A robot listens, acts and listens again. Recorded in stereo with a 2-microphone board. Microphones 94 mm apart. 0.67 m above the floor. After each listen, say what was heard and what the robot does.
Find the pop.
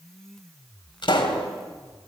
The pop: about 65° left or 115° left. Turn 65° left.
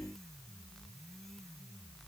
Keep listening.
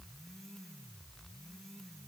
I heard a pop, but can't make it out now. It was about straight ahead or 50° left.